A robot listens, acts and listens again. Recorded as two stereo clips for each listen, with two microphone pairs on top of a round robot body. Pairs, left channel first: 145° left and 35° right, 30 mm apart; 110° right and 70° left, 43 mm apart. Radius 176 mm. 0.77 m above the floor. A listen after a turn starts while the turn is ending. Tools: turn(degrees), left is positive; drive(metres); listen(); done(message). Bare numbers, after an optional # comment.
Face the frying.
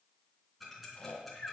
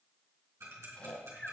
listen()
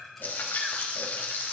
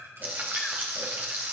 # The frying: 125° left.
turn(125)
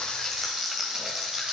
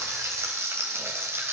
# The frying is now 45° left.
turn(45)
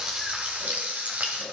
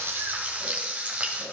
# The frying is now 10° left.
turn(10)
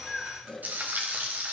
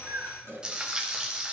done("Facing the frying.")